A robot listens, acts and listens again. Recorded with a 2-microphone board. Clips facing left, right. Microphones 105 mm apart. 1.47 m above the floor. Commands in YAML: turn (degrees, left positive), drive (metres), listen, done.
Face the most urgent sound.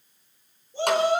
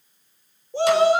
turn: -90
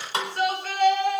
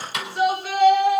done: "Facing the shout, over 4 m away."